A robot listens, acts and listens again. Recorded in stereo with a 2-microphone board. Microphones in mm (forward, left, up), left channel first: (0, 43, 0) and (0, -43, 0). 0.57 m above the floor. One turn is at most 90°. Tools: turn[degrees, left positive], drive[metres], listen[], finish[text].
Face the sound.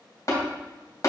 Thought: The tapping: about 45° left or 135° left.
Action: turn[45]
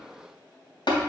Thought: So it is at 85° left.
Action: turn[85]
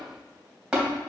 Thought: The tapping is now 10° right.
Action: turn[-10]
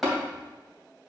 Action: finish[Facing the tapping.]